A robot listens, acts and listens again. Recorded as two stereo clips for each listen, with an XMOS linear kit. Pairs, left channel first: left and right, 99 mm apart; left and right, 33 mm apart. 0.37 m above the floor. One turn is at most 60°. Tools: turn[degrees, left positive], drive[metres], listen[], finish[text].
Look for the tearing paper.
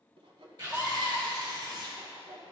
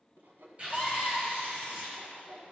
Thought: The tearing paper: about 50° right or 130° right.
Action: turn[-50]
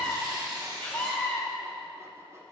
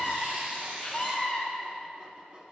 Thought: So it is at 70° right.
Action: turn[-60]
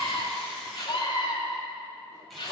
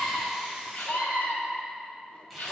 Thought: Nothing new. It was at 10° right.
Action: turn[-10]
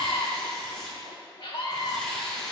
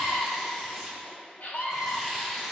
Thought: The tearing paper is now 10° left.
Action: turn[10]
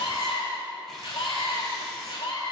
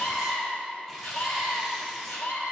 Action: listen[]
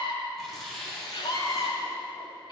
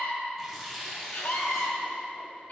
Action: finish[Found it: tearing paper, straight ahead, 1 to 2 m away.]